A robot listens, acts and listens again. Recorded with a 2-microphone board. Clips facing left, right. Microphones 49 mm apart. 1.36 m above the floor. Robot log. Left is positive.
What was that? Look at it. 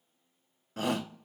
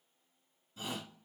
note: The shout: about 65° left or 115° left.
cmd yaw +65
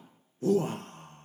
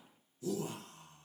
note: So it is at 50° left.
cmd yaw +50
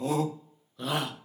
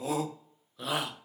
end: Found it: a shout, straight ahead, 1 to 2 m away.